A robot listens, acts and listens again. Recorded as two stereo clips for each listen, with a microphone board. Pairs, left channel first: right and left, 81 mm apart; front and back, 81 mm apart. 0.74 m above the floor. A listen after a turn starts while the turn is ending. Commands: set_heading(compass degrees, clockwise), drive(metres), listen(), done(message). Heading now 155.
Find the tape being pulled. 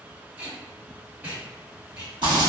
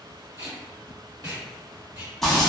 set_heading(0)
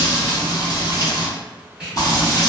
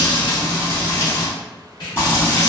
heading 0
set_heading(345)
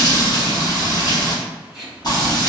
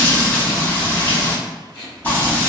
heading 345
done("Found it: tape being pulled, straight ahead, 1 to 2 m away.")